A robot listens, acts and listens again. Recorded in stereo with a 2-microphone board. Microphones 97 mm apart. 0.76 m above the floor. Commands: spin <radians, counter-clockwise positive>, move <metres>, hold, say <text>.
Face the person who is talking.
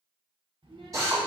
spin -1.05
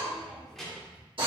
say Facing the child speaking, 1 to 2 m away.